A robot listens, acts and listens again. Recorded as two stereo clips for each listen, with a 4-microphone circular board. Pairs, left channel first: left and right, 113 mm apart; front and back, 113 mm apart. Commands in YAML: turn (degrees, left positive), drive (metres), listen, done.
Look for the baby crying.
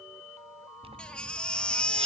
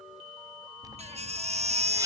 turn: 170
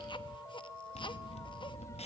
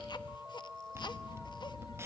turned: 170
listen: true
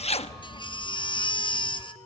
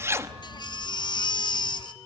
turn: 45
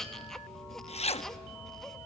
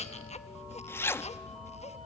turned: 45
done: "Found it: a baby crying, straight ahead."